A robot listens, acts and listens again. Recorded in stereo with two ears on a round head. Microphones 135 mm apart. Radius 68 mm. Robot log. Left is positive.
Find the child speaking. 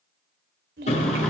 note: The child speaking: about 70° right or 110° right.
cmd yaw -70
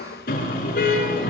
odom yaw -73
cmd idle
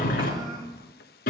note: So it is at 30° right.
cmd yaw -30
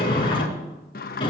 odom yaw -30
cmd idle
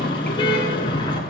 cmd idle
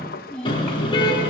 end: Found it: a child speaking, straight ahead, over 4 m away.